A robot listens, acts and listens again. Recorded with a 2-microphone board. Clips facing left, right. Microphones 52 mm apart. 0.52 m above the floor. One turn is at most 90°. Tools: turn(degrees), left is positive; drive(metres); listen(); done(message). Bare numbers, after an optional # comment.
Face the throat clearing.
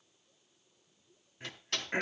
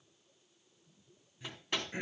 # The throat clearing: about 55° left or 125° left.
turn(55)
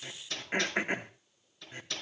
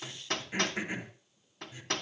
# So it is at 60° left.
turn(60)
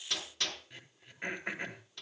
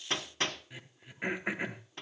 # The throat clearing is now 10° right.
turn(-10)
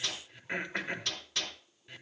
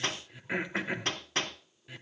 done("Found it: throat clearing, straight ahead.")